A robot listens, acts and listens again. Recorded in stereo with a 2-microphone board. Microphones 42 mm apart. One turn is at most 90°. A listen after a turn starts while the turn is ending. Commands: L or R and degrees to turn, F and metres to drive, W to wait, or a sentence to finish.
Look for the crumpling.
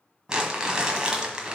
R20
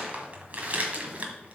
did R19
R90
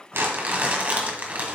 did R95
R45
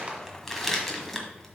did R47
Found it: crumpling, straight ahead, 1 to 2 m away.